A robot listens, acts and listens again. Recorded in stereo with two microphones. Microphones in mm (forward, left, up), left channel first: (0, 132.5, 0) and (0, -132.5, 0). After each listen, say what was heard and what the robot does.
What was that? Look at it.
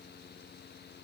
Keep listening.
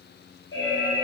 The alarm: about 50° left or 130° left. Turn 50° left.
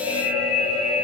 So it is at 80° left. Turn 80° left.
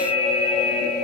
The alarm is now 30° left. Turn 30° left.
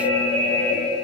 The alarm is now 10° left. Turn 10° left.
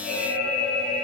Found it: an alarm, straight ahead.